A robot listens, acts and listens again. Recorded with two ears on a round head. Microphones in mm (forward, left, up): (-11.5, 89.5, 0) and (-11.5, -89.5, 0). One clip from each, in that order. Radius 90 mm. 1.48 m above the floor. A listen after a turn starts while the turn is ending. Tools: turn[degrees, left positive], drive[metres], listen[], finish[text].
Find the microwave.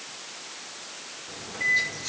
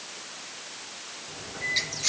Thought: The microwave: about 50° left or 130° left.
Action: turn[50]
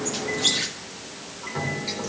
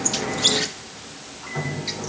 Action: finish[Facing the microwave, 2 to 4 m away.]